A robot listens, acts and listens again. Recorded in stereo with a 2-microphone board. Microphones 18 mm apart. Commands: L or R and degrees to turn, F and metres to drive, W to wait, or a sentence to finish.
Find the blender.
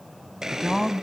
R40
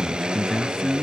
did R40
R100
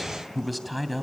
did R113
L10
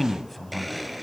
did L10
Found it: a blender, straight ahead.